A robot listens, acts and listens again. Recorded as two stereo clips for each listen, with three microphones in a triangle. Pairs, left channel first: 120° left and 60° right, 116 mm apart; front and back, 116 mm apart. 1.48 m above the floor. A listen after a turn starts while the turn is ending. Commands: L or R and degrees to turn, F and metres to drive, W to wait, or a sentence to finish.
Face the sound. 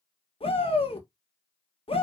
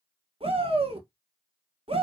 L150
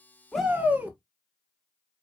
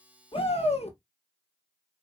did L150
L15
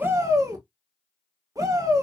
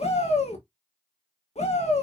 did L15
Found it: a shout, straight ahead, 1 to 2 m away.